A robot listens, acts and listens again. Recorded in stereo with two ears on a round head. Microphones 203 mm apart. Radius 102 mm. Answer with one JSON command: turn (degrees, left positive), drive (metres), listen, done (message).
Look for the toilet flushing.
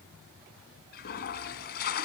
{"turn": 45}
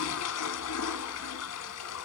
{"turn": 85}
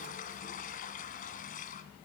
{"turn": 40}
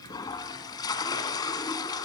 {"turn": 20}
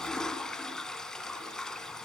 {"done": "Facing the toilet flushing, 2 to 4 m away."}